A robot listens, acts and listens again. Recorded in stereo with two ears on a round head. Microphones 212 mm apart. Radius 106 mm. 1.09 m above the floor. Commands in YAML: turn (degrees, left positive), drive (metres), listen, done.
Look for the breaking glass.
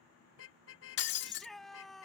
turn: 50
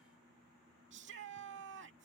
listen: true
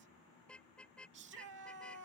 done: "I heard breaking glass, but can't make it out now. It was about straight ahead or 80° left."